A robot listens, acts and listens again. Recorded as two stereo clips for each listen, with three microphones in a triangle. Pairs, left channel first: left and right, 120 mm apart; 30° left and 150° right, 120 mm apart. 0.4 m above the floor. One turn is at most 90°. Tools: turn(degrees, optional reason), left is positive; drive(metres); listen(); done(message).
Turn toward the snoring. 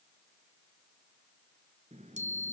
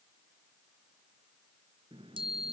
listen()
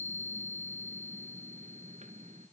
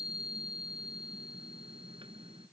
listen()
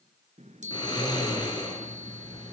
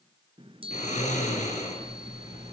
turn(degrees=35, reason="The snoring: 35° left.")
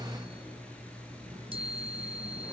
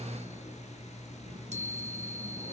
turn(degrees=10, reason="The snoring is now 10° left.")
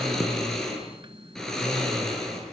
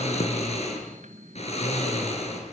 done("Facing the snoring, over 4 m away.")